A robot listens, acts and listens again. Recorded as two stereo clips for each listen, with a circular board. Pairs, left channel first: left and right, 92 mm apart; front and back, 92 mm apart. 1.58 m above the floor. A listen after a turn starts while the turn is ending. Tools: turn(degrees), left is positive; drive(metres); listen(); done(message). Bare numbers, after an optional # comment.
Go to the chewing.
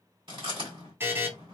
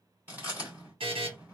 # The chewing: 110° right.
turn(-110)
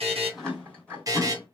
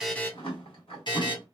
# The chewing is now 10° left.
turn(10)
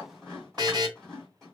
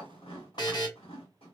drive(1.0)
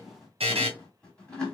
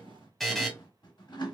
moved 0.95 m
# The chewing is now 10° left.
turn(10)
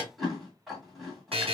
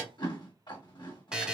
drive(1.0)
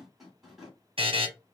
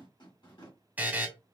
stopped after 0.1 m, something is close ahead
done("Arrived at the chewing, straight ahead.")